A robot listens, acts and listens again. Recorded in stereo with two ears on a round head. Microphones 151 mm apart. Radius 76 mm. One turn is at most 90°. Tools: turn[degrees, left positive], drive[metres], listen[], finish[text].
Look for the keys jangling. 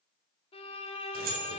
Thought: The keys jangling: about 60° right or 120° right.
Action: turn[-60]
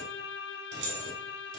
Thought: So it is at 75° right.
Action: turn[-75]
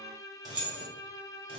Thought: The keys jangling is now 35° right.
Action: turn[-35]
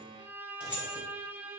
Thought: The keys jangling is now 10° right.
Action: turn[-10]
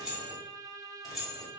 Action: finish[Facing the keys jangling.]